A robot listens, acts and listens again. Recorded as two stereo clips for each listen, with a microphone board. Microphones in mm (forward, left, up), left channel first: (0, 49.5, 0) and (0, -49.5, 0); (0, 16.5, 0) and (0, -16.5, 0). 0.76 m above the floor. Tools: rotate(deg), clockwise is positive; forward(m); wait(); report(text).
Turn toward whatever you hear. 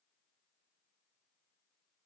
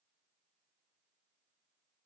wait()
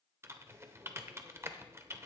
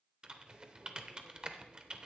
rotate(25)
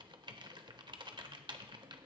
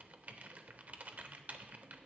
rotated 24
rotate(125)
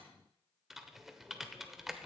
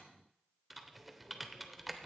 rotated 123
report("Found it: typing on a keyboard, straight ahead, under 1 m away.")